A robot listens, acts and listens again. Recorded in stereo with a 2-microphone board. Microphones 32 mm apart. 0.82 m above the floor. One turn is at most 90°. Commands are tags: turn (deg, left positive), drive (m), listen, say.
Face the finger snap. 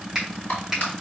<turn deg="-15"/>
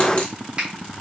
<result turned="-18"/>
<turn deg="-90"/>
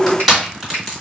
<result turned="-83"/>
<turn deg="-65"/>
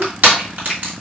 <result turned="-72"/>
<say>Found it: a finger snap, straight ahead.</say>